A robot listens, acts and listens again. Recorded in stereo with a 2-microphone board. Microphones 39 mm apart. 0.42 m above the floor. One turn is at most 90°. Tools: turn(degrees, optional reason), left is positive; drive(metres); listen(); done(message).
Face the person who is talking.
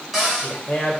turn(degrees=45, reason="The man speaking: about 45° left or 135° left.")
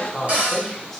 turn(degrees=15, reason="So it is at 15° left.")
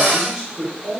turn(degrees=-25, reason="The man speaking is now 25° right.")
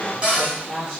turn(degrees=-15, reason="The man speaking is now 15° right.")
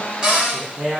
turn(degrees=-10, reason="The man speaking is now 10° right.")
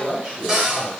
done("Found it: a man speaking, straight ahead, 2 to 4 m away.")